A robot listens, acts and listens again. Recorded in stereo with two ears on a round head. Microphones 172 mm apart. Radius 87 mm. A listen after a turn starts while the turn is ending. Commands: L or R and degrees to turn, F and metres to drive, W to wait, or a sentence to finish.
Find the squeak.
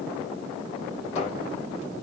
L35
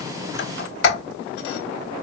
L110
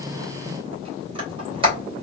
R25
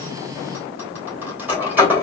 R10
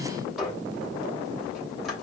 W
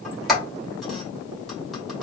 Facing the squeak, 2 to 4 m away.